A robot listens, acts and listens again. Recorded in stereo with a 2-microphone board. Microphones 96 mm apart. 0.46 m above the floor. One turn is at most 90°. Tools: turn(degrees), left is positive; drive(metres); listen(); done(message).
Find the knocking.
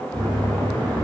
turn(degrees=-60)
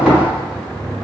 turn(degrees=-10)
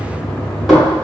done("Found it: knocking, straight ahead.")